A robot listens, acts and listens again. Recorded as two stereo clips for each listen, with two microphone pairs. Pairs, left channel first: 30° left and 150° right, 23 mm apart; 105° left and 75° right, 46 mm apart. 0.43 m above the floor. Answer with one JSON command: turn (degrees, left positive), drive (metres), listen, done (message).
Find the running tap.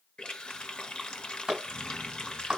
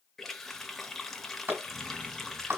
{"turn": 20}
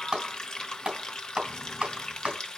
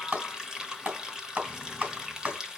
{"done": "Found it: a running tap, straight ahead."}